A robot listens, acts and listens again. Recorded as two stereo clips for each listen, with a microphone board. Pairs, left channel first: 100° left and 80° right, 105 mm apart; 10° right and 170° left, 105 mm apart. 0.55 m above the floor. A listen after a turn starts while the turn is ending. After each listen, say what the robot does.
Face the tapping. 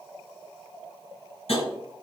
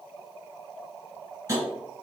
Turn 115° left.
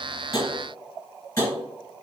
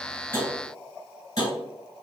Turn 40° left.
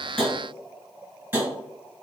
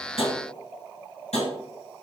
Facing the tapping.